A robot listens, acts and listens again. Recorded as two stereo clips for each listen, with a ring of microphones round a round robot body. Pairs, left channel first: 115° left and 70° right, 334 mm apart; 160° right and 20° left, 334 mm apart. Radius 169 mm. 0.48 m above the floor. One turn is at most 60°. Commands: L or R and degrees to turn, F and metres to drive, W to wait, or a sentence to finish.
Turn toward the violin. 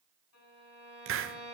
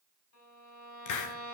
L60
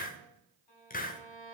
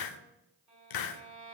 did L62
L60
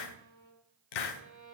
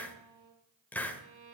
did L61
L35
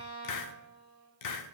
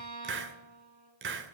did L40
Facing the violin, over 4 m away.